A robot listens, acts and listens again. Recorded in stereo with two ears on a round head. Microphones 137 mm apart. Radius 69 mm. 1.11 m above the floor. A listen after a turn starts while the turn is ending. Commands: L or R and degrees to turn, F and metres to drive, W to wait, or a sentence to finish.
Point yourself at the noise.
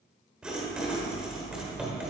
R30
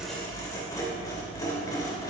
L25
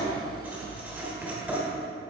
R10
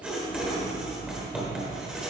Facing the writing, 2 to 4 m away.